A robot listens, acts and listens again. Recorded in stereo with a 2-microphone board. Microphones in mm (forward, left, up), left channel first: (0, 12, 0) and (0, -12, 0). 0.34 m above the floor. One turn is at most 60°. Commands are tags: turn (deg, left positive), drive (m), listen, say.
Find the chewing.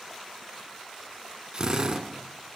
<listen/>
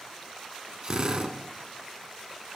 <listen/>
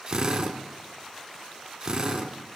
<say>I can't make out chewing, only a drill.</say>